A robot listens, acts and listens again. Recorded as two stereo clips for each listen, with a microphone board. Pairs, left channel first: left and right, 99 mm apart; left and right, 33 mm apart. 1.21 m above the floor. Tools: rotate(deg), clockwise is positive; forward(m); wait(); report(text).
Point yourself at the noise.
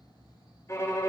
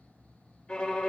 rotate(-30)
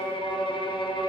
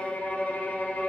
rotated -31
rotate(-115)
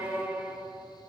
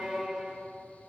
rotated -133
rotate(15)
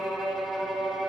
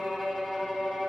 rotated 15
report("Facing the violin.")